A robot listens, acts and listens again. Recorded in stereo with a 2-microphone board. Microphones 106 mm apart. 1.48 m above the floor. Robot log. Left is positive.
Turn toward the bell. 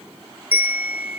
note: The bell: about 15° right or 165° right.
cmd yaw -15
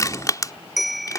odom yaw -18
end: Facing the bell.